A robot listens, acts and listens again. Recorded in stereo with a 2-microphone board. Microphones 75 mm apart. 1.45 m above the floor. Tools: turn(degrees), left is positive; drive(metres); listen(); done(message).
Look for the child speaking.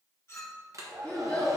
turn(degrees=30)
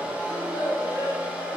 turn(degrees=105)
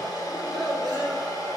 turn(degrees=-15)
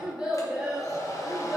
turn(degrees=-20)
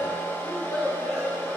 done("Facing the child speaking.")